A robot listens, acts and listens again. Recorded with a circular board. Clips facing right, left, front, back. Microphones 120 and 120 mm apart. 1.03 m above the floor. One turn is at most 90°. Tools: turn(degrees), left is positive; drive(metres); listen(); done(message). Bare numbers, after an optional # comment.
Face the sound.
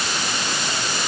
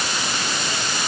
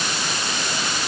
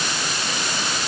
listen()
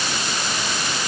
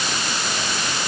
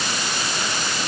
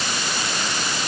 listen()
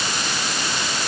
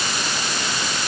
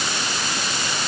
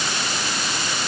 done("I can't make out anything to turn to.")